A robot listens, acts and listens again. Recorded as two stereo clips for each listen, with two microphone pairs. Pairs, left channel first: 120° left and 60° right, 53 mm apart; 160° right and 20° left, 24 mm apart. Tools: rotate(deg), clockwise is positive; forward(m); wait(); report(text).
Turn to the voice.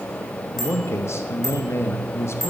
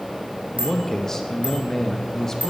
rotate(-130)
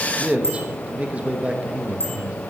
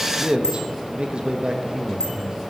report("Facing the man speaking, 1 to 2 m away.")